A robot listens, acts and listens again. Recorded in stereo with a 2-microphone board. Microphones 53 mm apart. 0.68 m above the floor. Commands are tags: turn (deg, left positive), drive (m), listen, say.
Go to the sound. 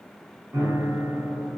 <turn deg="-60"/>
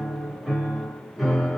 <drive m="1.0"/>
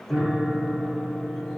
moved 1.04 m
<turn deg="-10"/>
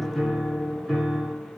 <drive m="1.0"/>
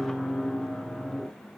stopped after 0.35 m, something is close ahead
<turn deg="-10"/>
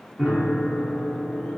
<say>I am next to the piano.</say>